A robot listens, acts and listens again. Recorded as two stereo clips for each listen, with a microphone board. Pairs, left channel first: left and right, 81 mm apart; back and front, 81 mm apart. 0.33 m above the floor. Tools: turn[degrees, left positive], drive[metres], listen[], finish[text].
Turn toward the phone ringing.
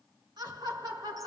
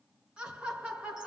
Action: listen[]
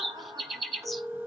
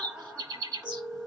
Thought: The phone ringing: 30° right.
Action: turn[-30]
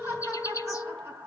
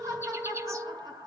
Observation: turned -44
Thought: The phone ringing is now 15° left.
Action: turn[15]
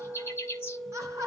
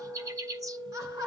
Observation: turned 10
Action: finish[Found it: a phone ringing, straight ahead, 1 to 2 m away.]